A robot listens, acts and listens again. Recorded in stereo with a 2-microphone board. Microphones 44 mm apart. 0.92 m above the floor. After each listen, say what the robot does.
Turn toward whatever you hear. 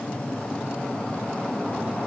Keep listening.
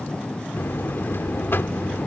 Turn 60° left.
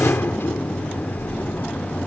Turn 60° left.
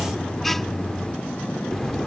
Facing the buzzer.